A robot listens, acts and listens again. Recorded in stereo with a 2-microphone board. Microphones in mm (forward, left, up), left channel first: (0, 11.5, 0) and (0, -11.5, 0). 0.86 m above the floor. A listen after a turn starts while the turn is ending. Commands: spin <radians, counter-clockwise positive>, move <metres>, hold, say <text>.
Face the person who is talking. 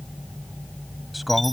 spin 0.52
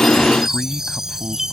spin 2.71
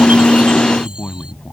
spin 0.87
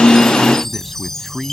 spin -0.17
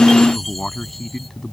spin 0.17
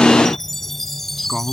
say Found it: a man speaking, straight ahead.